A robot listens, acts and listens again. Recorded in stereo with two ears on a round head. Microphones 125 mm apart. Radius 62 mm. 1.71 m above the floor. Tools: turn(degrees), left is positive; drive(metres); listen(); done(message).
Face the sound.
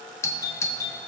turn(degrees=20)
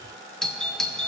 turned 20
done("Found it: a doorbell, straight ahead.")